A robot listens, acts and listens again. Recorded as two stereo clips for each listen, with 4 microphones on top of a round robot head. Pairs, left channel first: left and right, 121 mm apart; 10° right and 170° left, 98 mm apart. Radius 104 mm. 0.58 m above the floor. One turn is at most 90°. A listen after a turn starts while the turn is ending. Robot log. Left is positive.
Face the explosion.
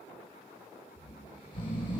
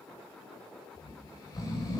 cmd idle
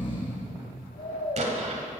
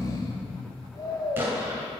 note: The explosion: 115° right.
cmd yaw -90
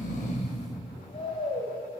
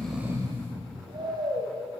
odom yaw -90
note: Nothing new. It was at 25° right.
cmd yaw -25
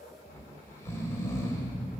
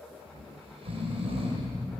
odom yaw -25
end: Facing where the explosion came from. I can't hear it now.